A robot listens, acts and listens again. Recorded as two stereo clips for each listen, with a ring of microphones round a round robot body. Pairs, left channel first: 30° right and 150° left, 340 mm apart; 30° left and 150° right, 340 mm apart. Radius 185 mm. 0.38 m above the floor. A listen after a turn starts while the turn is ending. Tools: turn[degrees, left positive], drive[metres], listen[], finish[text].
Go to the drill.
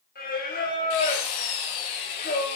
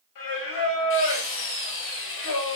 Thought: The drill: 25° right.
Action: turn[-25]
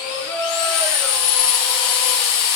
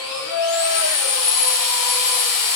Action: drive[1.0]
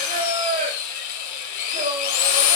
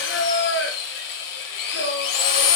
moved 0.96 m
Action: drive[1.0]
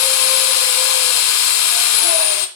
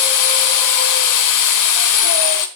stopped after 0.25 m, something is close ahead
Action: finish[Arrived at the drill, straight ahead.]